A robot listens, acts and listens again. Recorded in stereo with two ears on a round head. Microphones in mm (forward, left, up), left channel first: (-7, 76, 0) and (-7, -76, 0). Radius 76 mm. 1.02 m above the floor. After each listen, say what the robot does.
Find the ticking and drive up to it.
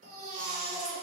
Keep listening.
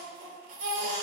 Keep listening.
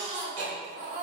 Turn 90° right.
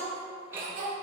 Turn 15° right.
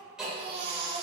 Drive 1.0 m forward.
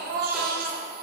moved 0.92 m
Keep listening.
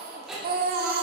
Drive 1.0 m forward.
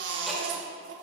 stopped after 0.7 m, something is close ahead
Keep listening.
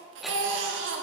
Keep listening.
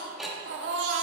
I am next to the ticking.